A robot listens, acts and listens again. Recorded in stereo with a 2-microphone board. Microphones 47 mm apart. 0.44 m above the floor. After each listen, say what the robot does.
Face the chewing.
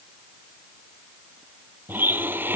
Keep listening.
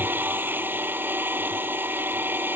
Keep listening.
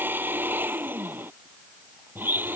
I can't make out chewing to turn to.